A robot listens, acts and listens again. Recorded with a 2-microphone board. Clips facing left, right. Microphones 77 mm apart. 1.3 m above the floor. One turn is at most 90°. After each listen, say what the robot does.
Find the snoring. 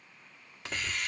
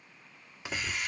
Keep listening.
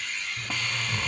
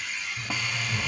Turn 45° left.
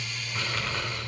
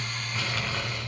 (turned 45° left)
Facing the snoring.